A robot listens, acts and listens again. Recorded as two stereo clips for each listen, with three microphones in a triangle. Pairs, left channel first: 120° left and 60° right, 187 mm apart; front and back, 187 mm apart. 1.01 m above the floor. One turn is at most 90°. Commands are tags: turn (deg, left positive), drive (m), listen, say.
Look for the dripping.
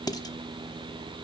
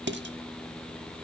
<listen/>
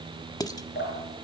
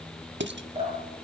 <turn deg="90"/>
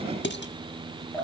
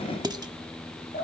<turn deg="40"/>
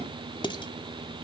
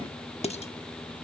<listen/>
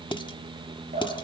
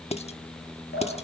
<turn deg="-10"/>
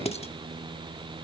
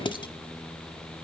<listen/>
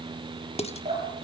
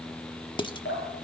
<say>Facing the dripping.</say>